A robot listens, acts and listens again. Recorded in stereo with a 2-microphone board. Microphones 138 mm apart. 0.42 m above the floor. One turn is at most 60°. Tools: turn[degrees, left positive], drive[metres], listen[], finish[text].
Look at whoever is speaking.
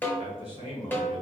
Thought: The man speaking: about 50° right or 130° right.
Action: turn[-50]
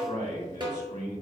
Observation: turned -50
Thought: So it is at 75° right.
Action: turn[-60]
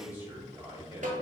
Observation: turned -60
Thought: The man speaking is now 15° right.
Action: turn[-15]
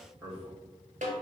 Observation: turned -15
Action: finish[Facing the man speaking, 1 to 2 m away.]